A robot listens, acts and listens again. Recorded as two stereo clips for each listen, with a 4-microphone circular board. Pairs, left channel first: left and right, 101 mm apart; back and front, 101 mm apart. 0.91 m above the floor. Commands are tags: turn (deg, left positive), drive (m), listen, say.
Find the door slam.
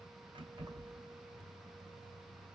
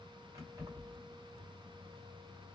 <listen/>
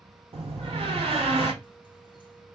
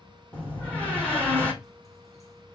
<turn deg="-105"/>
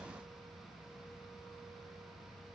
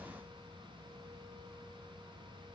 <say>I heard a door slam from this way, but can't make it out now.</say>